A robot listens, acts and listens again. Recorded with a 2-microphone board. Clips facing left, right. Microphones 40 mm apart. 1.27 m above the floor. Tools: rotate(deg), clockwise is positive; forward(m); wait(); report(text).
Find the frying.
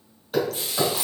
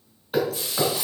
rotate(-40)
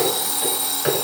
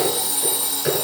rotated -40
wait()
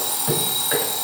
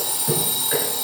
wait()
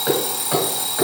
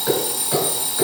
report("I heard frying, but can't make it out now. It was about straight ahead or 100° left.")